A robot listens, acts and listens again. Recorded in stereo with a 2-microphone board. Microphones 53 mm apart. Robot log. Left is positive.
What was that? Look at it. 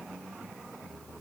cmd idle
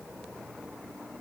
cmd idle
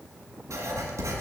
cmd yaw -90
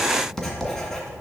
end: Found it: writing, straight ahead.